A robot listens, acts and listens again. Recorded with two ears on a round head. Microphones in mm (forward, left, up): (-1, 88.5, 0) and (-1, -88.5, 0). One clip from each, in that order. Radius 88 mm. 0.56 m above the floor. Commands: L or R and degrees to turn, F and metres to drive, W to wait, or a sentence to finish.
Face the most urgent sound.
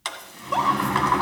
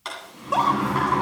L30
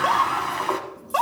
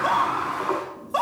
L150
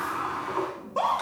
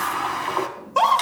R50
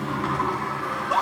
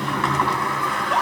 Facing the scream.